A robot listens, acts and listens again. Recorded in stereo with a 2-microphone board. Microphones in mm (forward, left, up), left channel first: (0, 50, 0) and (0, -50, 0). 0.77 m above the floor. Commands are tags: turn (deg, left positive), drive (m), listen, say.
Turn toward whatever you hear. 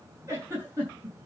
<turn deg="-25"/>
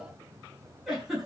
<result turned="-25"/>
<say>Found it: a giggle, straight ahead.</say>